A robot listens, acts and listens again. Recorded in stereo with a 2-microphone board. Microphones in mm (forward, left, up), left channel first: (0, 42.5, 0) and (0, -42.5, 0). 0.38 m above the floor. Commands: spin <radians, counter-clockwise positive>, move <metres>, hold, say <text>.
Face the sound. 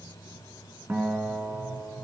spin -0.44
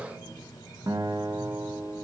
spin -2.27
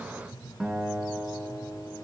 say Facing the guitar, 2 to 4 m away.